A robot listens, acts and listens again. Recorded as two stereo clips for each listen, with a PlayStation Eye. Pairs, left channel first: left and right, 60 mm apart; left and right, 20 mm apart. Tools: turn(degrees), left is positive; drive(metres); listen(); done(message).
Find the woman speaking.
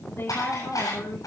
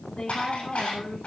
turn(degrees=45)
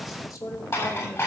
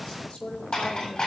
turn(degrees=85)
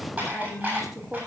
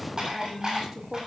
turn(degrees=-10)
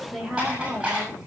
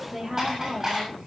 turn(degrees=-10)
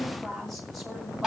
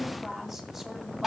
done("Facing the woman speaking.")